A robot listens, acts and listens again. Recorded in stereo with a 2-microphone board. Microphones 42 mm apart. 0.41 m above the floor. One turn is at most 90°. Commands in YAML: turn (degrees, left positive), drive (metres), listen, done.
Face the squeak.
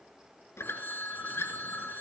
turn: 90
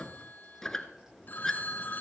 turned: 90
turn: 10
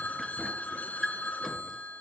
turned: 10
done: "Found it: a squeak, straight ahead, 1 to 2 m away."